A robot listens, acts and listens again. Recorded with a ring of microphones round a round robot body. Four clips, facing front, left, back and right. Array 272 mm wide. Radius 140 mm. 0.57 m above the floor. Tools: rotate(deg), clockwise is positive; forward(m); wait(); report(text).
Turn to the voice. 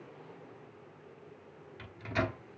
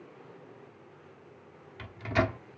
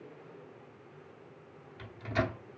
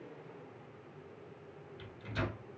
wait()
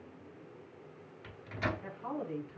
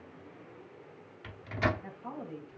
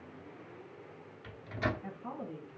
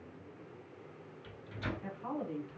rotate(35)
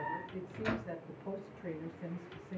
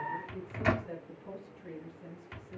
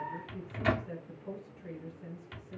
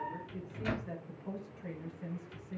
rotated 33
rotate(15)
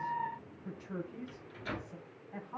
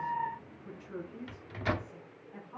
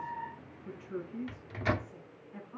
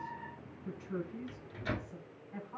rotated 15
report("Found it: a woman speaking, straight ahead.")